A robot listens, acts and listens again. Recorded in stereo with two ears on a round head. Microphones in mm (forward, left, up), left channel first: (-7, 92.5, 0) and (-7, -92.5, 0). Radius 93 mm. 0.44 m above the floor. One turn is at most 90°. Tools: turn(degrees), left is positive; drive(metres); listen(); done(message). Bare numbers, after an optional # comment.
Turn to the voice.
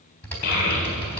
# The child speaking: about 45° left or 135° left.
turn(45)
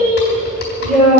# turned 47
done("Found it: a child speaking, straight ahead, over 4 m away.")